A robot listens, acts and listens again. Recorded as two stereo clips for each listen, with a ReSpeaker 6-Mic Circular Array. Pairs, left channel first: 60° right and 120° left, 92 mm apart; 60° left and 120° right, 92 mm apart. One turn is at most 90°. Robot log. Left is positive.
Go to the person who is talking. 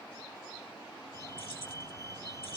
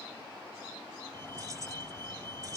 cmd idle
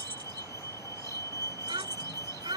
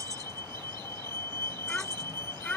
note: The child speaking: 135° left.
cmd yaw +90
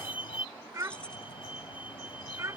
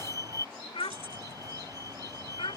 note: The child speaking is now 65° left.
cmd yaw +65
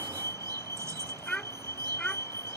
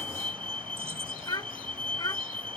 note: The child speaking is now 20° left.
cmd yaw +20
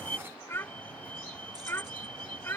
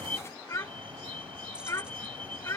cmd fwd 1.0
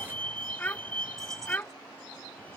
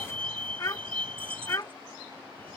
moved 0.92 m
note: The child speaking is now 10° left.
cmd yaw +10
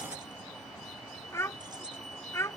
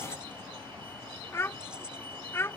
cmd fwd 1.0
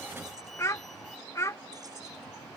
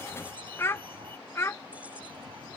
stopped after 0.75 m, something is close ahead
end: I am next to the child speaking.